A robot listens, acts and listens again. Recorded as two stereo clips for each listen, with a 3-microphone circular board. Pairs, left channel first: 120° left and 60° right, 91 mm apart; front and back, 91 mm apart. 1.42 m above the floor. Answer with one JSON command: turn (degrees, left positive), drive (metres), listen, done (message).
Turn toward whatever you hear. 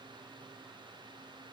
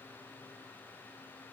{"listen": true}
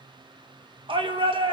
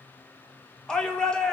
{"turn": -80}
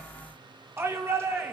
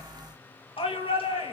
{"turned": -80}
{"done": "Facing the shout."}